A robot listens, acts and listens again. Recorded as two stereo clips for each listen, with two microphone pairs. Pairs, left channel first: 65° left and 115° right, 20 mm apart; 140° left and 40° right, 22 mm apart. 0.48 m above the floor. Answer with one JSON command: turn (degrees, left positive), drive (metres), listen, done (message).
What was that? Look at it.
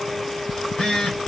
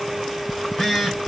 {"turn": 50}
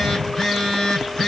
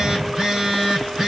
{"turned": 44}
{"done": "Found it: a phone buzzing, straight ahead, 2 to 4 m away."}